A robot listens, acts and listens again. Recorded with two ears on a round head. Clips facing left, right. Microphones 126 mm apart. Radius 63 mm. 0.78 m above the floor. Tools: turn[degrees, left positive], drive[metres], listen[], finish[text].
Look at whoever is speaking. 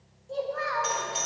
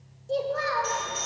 Thought: The child speaking: about 35° right or 145° right.
Action: turn[-35]
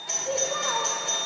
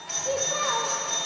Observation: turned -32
Action: listen[]
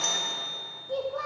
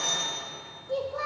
Action: finish[Found it: a child speaking, straight ahead.]